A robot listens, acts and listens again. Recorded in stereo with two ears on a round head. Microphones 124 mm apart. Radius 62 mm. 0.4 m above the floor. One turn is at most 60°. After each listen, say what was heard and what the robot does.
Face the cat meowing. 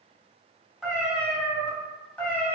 The cat meowing: about 15° left or 165° left. Turn 15° left.
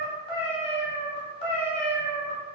So it is at 115° left. Turn 60° left.
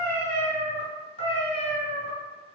The cat meowing is now 40° left. Turn 40° left.
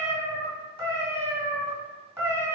The cat meowing is now 20° right. Turn 20° right.
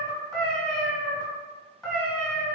Facing the cat meowing, 1 to 2 m away.